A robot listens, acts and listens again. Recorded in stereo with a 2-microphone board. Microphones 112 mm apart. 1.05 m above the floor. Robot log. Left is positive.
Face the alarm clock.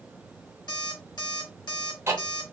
note: The alarm clock: about 40° left or 140° left.
cmd yaw +40
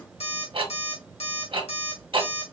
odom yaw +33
note: So it is at 105° left.
cmd yaw +105
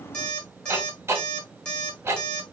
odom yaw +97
note: The alarm clock is now 10° left.
cmd yaw +10
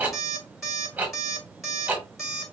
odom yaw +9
end: Found it: an alarm clock, straight ahead.